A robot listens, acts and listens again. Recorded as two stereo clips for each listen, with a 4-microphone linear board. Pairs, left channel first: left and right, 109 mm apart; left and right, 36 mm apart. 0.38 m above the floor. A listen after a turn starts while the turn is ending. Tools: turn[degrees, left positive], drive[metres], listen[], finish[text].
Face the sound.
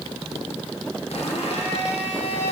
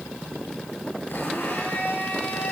Thought: The blender: about 75° left or 105° left.
Action: turn[75]
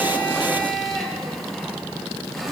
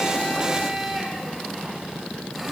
Action: finish[Found it: a blender, straight ahead, over 4 m away.]